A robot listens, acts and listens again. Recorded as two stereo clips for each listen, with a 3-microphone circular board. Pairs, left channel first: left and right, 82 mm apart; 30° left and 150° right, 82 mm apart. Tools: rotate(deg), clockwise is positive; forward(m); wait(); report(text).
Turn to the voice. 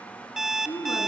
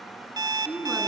rotate(-125)
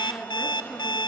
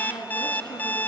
rotate(-25)
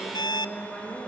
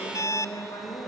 report("Facing the woman speaking.")